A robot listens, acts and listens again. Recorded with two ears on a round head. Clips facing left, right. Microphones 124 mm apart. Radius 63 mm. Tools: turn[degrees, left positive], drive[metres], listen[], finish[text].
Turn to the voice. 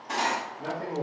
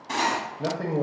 Thought: The man speaking: about 60° right or 120° right.
Action: turn[-60]
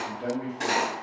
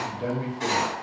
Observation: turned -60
Thought: So it is at 30° right.
Action: turn[-30]
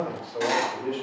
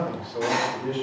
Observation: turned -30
Thought: The man speaking is now 10° left.
Action: turn[10]
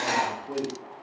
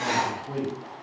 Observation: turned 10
Action: finish[Facing the man speaking, under 1 m away.]